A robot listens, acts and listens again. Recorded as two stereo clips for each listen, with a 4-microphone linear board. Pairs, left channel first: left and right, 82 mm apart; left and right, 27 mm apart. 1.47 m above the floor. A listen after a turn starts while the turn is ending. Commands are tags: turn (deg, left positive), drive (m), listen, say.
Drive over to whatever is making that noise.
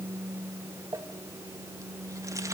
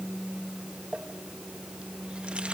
<turn deg="-40"/>
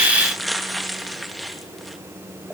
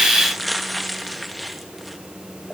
<drive m="1.0"/>
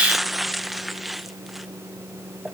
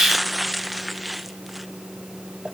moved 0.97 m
<drive m="1.0"/>
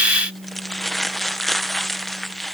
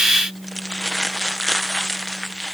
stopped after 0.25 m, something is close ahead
<say>I am next to the crumpling.</say>